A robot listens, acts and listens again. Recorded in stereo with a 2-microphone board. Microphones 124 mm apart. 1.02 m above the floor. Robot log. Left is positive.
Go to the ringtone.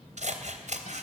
cmd idle
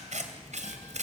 cmd idle
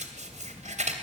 end: I can't make out a ringtone, only scissors.